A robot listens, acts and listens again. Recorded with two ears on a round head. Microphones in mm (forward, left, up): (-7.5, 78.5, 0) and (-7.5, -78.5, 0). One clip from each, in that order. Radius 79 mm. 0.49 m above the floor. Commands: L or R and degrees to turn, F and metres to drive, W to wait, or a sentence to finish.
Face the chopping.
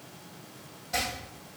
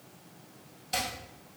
R70
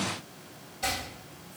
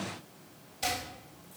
R35
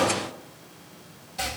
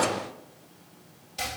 R20
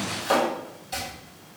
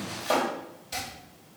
Found it: chopping, straight ahead, 1 to 2 m away.